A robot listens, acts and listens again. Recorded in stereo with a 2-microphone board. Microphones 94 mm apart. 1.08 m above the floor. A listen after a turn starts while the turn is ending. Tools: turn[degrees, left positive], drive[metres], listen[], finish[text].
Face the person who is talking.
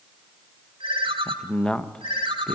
Action: turn[30]
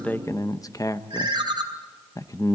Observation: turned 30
Thought: So it is at 135° left.
Action: turn[135]
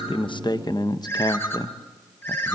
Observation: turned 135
Thought: The man speaking is now 55° left.
Action: turn[55]
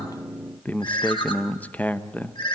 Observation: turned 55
Thought: The man speaking is now 20° left.
Action: turn[20]
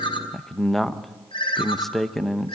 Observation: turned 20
Action: finish[Facing the man speaking.]